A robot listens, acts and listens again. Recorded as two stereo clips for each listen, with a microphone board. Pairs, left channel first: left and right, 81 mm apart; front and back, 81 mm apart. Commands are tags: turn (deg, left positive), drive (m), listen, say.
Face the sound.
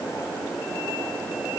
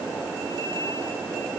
<listen/>
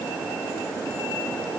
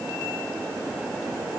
<listen/>
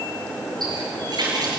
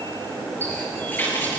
<turn deg="-65"/>
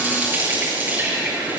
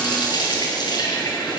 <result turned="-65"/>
<turn deg="-25"/>
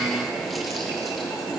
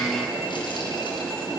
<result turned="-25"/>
<listen/>
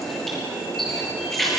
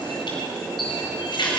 <say>Found it: a running tap, straight ahead.</say>